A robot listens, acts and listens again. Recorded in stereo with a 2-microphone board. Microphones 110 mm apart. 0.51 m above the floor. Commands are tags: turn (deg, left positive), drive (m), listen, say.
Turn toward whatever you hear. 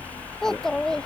<turn deg="30"/>
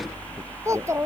<turn deg="-25"/>
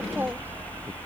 <listen/>
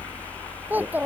<turn deg="-15"/>
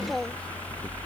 <say>Found it: a child speaking, straight ahead.</say>